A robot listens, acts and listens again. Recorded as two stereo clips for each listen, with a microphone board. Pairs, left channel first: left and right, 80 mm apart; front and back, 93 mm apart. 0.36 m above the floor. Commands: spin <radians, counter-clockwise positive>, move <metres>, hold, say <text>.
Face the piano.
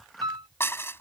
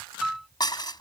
spin -1.66
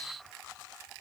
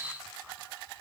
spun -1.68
hold
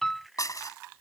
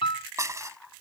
say Found it: a piano, straight ahead.